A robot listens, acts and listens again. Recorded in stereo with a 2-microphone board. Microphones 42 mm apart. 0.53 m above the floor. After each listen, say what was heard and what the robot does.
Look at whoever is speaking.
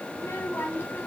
The child speaking: about 75° left or 105° left. Turn 75° left.
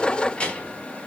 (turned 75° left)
So it is at 25° left. Turn 25° left.
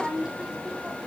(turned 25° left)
The child speaking is now 15° right. Turn 15° right.
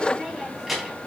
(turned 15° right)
Facing the child speaking.